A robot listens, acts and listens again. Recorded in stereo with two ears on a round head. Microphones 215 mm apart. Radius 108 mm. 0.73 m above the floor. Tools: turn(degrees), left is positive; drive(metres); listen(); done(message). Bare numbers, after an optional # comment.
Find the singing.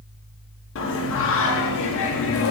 # The singing: about 55° left or 125° left.
turn(55)
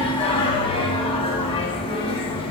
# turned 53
# So it is at 25° left.
turn(25)
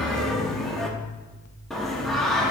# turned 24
done("Found it: singing, straight ahead.")